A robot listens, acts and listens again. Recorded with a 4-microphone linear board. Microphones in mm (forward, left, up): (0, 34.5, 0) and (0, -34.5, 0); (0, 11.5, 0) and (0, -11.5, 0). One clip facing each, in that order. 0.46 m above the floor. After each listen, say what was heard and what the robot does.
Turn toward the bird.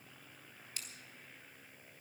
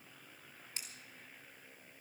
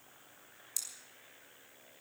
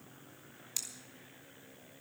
Keep listening.
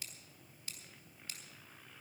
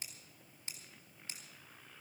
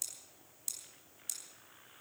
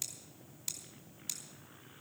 Keep listening.
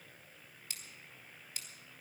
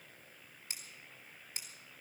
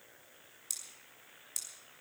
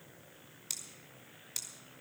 I can't make out a bird to turn to.